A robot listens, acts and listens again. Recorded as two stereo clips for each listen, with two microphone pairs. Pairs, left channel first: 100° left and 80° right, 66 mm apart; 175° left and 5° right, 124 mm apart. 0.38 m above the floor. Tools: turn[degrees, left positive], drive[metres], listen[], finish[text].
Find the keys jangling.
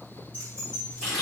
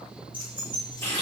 Thought: The keys jangling: 30° left.
Action: turn[30]
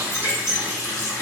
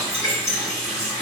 Thought: The keys jangling is now 10° right.
Action: turn[-10]
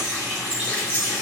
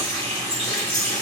Thought: The keys jangling is now 25° right.
Action: turn[-25]
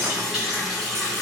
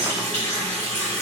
Action: listen[]
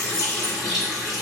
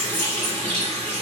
Action: listen[]
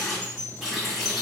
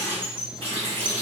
Thought: The keys jangling is now 50° right.
Action: turn[-50]
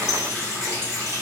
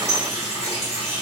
Action: finish[Facing the keys jangling.]